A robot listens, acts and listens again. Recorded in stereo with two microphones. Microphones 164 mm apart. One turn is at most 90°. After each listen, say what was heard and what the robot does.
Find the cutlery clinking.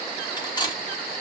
The cutlery clinking: about 25° left or 155° left. Turn 25° left.
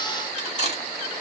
So it is at 130° left. Turn 90° left.
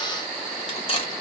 The cutlery clinking is now 35° left. Turn 35° left.
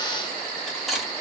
Found it: cutlery clinking, straight ahead, under 1 m away.